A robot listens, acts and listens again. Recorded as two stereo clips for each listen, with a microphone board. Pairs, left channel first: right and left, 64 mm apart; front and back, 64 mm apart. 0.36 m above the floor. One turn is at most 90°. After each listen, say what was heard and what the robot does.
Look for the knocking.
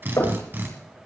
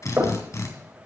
The knocking: 130° right. Turn 90° right.
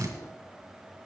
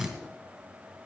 Nothing new. It was at 40° right. Turn 40° right.
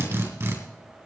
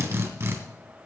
Keep listening.
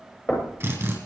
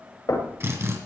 The knocking is now 25° right. Turn 25° right.
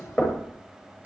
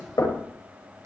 The knocking is now 15° right. Turn 15° right.
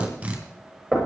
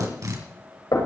Facing the knocking.